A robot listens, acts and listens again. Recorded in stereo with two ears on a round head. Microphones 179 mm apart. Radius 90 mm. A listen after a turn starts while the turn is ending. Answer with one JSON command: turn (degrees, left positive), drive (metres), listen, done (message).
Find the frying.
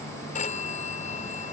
{"listen": true}
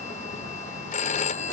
{"listen": true}
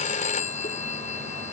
{"done": "I can't make out frying to turn to."}